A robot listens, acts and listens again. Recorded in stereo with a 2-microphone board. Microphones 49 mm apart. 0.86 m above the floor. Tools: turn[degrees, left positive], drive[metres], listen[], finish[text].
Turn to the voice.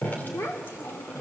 Thought: The child speaking: about 65° left or 115° left.
Action: turn[65]
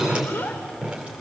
Thought: So it is at 45° left.
Action: turn[45]
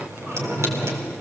Action: listen[]
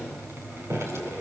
Action: listen[]
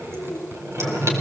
Thought: The child speaking is now 25° right.
Action: turn[-25]
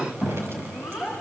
Action: finish[Found it: a child speaking, straight ahead, over 4 m away.]